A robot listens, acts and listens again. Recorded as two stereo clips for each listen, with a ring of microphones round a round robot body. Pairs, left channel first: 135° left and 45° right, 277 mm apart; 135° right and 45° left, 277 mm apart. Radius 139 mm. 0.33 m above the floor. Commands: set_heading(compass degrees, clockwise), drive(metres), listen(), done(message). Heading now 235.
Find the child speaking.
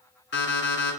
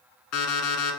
listen()
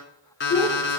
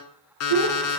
set_heading(170)
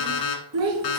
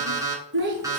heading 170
set_heading(180)
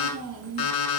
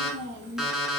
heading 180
set_heading(190)
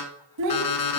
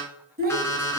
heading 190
set_heading(205)
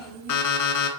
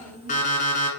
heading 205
set_heading(230)
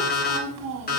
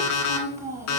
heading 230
set_heading(250)
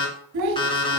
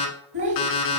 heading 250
done("Found it: a child speaking, straight ahead.")